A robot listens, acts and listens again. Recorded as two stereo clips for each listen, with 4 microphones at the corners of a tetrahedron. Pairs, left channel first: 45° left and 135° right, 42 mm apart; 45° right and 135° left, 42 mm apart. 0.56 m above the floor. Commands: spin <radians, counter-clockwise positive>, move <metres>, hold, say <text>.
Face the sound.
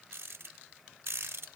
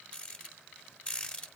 spin -1.92
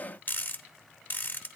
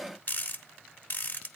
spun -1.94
say Facing the rattle.